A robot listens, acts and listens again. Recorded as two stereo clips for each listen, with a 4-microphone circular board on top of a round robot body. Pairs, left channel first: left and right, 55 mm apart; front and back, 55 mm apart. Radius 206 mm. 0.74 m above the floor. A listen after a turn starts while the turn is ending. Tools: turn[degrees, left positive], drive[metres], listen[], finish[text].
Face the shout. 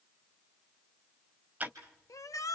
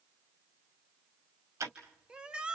Thought: The shout: 105° left.
Action: turn[105]
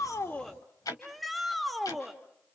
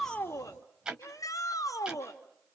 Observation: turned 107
Action: finish[Found it: a shout, straight ahead.]